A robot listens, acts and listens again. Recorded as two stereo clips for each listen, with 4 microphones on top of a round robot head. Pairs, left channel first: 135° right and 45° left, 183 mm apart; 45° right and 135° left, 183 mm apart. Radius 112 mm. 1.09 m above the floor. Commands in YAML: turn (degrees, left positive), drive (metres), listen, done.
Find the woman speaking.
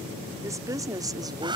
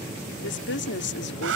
turn: -25
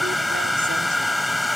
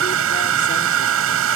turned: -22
listen: true
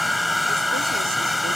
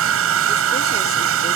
listen: true
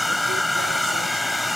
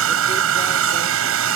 done: "I heard a woman speaking from this way, but can't make it out now."